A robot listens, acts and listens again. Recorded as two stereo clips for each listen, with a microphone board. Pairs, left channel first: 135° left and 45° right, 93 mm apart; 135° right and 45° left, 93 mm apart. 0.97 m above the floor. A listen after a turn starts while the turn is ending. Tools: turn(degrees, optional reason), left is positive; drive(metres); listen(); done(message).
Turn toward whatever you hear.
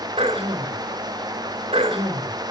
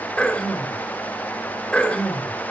turn(degrees=-55, reason="The throat clearing: 55° right.")
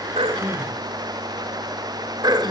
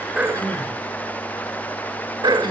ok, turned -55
done("Facing the throat clearing.")